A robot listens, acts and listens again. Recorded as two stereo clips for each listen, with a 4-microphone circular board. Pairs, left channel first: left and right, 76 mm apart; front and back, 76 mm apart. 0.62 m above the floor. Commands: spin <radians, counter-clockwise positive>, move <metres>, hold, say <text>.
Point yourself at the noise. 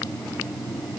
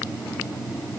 hold
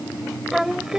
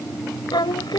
spin -0.17
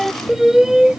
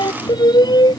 spin -0.17
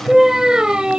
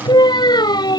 spin -0.17
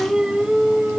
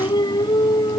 spin -0.17
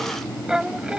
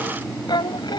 spin -0.17
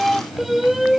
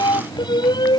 say Facing the singing.